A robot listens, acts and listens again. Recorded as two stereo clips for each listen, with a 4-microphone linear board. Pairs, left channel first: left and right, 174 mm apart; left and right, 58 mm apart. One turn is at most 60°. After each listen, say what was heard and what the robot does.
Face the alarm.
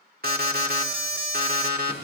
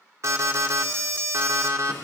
The alarm: about 60° right or 120° right. Turn 60° right.
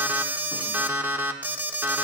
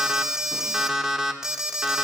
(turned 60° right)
So it is at 10° right. Turn 10° right.
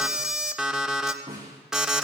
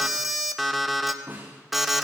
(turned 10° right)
Facing the alarm, 1 to 2 m away.